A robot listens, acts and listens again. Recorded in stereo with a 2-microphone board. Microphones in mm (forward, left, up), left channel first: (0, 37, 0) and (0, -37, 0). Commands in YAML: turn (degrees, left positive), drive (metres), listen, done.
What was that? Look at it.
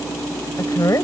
turn: 50
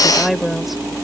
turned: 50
done: "Found it: a woman speaking, straight ahead."